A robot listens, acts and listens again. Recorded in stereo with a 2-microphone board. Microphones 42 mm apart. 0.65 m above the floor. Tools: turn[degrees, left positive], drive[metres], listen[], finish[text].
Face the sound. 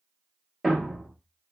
Action: turn[30]
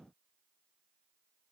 Action: listen[]
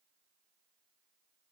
Action: finish[I heard a thud, but can't make it out now. It was about 25° right or 145° left.]